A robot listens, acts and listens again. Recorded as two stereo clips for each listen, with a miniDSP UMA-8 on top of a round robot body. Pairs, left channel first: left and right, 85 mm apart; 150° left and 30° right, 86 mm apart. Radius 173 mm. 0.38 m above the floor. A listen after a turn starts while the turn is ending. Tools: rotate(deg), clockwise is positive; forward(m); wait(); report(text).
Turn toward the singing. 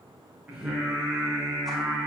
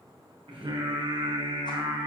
report("Facing the singing.")